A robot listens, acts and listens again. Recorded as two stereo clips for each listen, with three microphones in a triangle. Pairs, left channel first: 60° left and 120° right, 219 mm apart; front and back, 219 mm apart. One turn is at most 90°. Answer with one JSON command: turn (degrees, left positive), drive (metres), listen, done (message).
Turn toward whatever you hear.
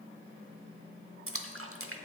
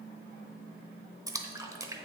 {"turn": -90}
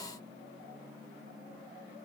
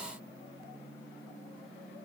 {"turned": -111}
{"done": "Facing where the splash came from. I can't hear it now."}